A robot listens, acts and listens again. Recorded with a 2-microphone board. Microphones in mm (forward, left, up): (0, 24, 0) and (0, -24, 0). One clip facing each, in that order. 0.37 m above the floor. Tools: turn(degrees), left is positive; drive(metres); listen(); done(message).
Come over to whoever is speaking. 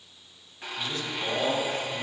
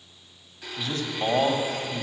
turn(degrees=-45)
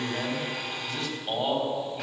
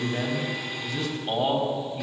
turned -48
drive(metres=1.0)
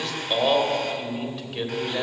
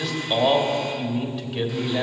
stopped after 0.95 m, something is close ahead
done("Arrived at the man speaking, straight ahead.")